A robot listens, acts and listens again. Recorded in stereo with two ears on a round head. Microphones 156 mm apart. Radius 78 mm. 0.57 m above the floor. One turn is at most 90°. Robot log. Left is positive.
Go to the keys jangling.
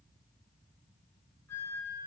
cmd idle
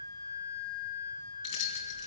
cmd yaw +90
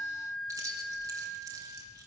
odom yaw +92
note: So it is at 20° right.
cmd yaw -20
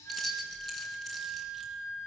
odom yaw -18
cmd fwd 1.0
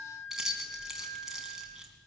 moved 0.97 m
cmd fwd 1.0
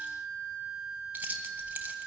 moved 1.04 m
note: The keys jangling is now 10° right.
cmd yaw -10
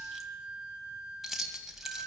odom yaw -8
cmd fwd 1.0
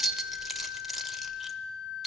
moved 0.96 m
cmd fwd 1.0
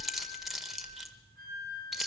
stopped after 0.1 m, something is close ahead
end: Arrived at the keys jangling, straight ahead.